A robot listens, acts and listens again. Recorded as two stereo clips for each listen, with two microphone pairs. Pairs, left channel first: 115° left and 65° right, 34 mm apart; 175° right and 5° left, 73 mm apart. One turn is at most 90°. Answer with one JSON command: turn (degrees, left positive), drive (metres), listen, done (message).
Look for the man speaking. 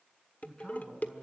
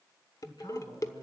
{"turn": -90}
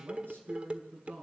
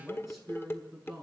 {"turn": -85}
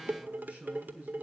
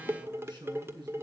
{"turn": -15}
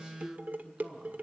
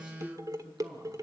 {"done": "Found it: a man speaking, straight ahead."}